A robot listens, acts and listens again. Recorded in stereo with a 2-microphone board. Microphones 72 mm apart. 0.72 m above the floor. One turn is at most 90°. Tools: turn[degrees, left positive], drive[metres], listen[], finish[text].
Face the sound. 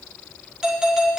Action: turn[-30]
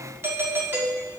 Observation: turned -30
Thought: So it is at 140° right.
Action: turn[-90]
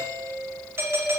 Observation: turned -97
Thought: The doorbell is now 45° right.
Action: turn[-45]
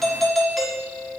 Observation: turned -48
Action: finish[Facing the doorbell, 1 to 2 m away.]